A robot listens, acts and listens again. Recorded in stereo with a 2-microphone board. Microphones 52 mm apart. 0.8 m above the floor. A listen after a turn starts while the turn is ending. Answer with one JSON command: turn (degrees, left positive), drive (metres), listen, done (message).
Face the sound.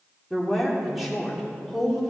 {"turn": 30}
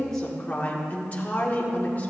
{"turn": 150}
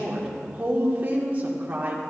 {"turn": -30}
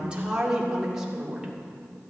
{"turn": -10}
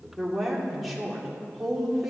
{"done": "Facing the woman speaking, 2 to 4 m away."}